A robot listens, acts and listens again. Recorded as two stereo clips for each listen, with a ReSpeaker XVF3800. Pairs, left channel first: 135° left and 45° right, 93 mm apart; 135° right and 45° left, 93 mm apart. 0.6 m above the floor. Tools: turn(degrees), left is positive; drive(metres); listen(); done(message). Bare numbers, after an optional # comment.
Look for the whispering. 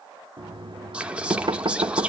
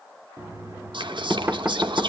# The whispering: 30° left.
turn(30)
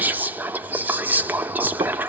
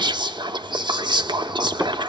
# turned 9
# The whispering is now 25° left.
turn(25)
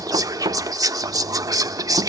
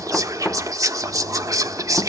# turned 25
done("Found it: whispering, straight ahead.")